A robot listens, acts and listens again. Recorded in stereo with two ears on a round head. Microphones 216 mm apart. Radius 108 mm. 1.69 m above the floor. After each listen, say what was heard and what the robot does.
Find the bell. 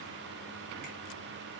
Keep listening.
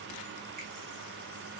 Keep listening.
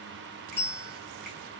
Turn 30° left.
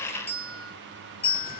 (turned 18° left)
So it is at 155° left. Turn 155° left.
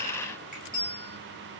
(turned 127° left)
The bell is now 25° left. Turn 25° left.
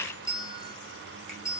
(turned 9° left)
The bell is now 15° left. Turn 15° left.
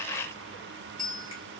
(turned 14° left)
Facing the bell, 1 to 2 m away.